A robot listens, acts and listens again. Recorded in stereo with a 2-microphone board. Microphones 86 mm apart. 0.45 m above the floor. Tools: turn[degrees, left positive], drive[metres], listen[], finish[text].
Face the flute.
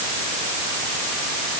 Action: listen[]
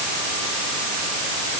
Action: listen[]
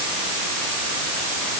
Action: finish[I can't make out a flute to turn to.]